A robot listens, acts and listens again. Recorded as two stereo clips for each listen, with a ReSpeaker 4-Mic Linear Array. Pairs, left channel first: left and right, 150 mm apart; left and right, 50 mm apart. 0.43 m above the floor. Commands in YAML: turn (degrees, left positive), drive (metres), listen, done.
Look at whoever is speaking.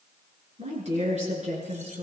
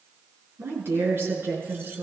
turn: -50
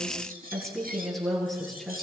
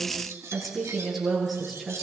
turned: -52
done: "Facing the woman speaking."